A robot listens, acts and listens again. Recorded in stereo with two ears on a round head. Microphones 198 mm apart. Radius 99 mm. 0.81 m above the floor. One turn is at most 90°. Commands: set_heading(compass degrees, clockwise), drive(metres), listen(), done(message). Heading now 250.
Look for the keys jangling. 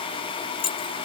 set_heading(225)
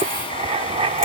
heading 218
listen()
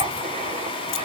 listen()
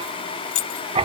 set_heading(128)
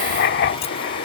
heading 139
set_heading(104)
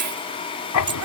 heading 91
set_heading(106)
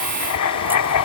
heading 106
done("Facing where the keys jangling came from. I can't hear it now.")